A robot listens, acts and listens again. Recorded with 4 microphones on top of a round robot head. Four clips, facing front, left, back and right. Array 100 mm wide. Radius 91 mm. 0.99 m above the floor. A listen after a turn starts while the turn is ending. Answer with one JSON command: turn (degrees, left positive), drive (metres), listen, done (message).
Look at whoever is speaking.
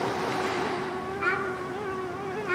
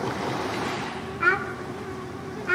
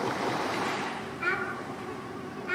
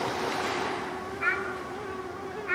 {"turn": 80}
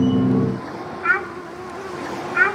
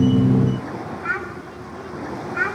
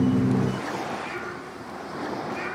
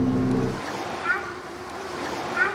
{"done": "Facing the child speaking."}